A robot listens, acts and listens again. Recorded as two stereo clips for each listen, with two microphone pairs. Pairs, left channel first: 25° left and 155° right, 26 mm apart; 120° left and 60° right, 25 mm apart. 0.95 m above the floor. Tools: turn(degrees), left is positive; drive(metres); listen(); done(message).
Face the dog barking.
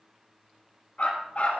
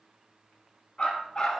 turn(degrees=65)
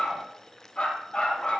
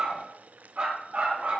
turn(degrees=-20)
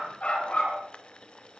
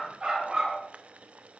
done("Facing the dog barking.")